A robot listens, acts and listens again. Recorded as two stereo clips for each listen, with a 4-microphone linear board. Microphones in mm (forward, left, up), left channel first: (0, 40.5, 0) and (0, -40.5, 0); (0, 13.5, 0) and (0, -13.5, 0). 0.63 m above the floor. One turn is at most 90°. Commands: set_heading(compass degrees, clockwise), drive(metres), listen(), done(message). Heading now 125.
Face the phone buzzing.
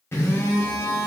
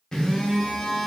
set_heading(95)
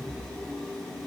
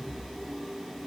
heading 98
done("Facing the phone buzzing.")